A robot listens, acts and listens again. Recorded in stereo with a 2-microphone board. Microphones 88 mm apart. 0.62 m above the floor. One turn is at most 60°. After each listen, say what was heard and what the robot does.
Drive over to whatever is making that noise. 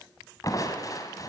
The crushing: about 45° left or 135° left. Turn 45° left.
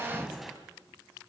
Drive 1.0 m forward.
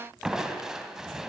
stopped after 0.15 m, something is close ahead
Blocked. The crushing is further on, straight ahead.